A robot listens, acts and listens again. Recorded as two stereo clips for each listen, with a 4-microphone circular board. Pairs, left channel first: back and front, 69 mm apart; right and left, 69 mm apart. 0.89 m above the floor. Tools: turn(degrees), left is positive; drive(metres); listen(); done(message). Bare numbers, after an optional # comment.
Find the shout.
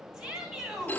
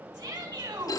# The shout: 80° left.
turn(80)
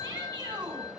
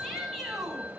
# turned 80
done("Found it: a shout, straight ahead, over 4 m away.")